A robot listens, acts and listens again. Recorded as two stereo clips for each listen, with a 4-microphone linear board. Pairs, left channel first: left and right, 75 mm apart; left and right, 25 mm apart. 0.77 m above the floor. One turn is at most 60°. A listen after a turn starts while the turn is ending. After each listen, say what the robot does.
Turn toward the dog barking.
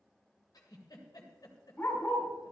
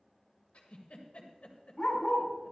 Turn 25° left.
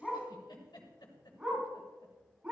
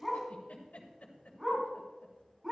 Turn 20° right.
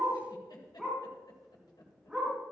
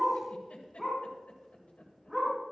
Turn 10° right.
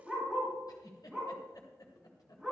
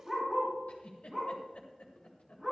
Found it: a dog barking, straight ahead, over 4 m away.